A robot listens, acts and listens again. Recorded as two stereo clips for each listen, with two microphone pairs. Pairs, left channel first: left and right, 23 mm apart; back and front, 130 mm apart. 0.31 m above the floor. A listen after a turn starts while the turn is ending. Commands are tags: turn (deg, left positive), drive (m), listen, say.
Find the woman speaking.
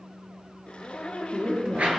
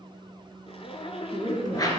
<turn deg="-60"/>
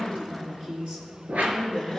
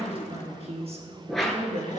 <turn deg="-35"/>
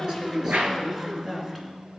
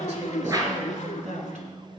<turn deg="-10"/>
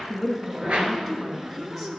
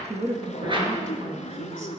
<say>Facing the woman speaking.</say>